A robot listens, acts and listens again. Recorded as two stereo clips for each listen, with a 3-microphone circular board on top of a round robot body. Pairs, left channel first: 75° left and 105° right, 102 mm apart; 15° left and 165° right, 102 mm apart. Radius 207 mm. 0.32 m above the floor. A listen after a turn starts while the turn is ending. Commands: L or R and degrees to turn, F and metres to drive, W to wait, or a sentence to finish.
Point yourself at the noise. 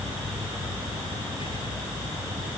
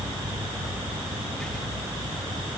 W
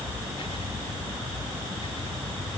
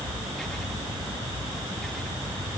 W
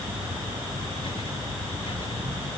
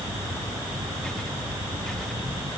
I can't make out anything.